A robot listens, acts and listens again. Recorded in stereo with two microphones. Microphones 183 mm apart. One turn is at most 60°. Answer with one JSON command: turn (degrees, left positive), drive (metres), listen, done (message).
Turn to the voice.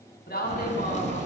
{"turn": 60}
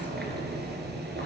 {"listen": true}
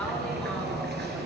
{"listen": true}
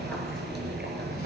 {"done": "I heard a woman speaking, but can't make it out now. It was about 5° left or 55° left."}